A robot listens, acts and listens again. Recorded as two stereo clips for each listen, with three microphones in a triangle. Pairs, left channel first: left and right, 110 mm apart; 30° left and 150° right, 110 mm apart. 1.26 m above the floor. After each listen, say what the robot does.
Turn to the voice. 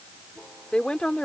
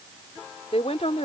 Turn 10° left.
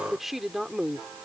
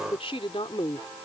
Found it: a woman speaking, straight ahead.